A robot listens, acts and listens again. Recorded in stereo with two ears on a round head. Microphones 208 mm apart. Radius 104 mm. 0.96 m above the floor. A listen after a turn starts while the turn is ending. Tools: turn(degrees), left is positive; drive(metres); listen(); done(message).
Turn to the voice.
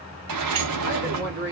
turn(degrees=-45)
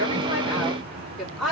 done("Found it: a woman speaking, straight ahead, 2 to 4 m away.")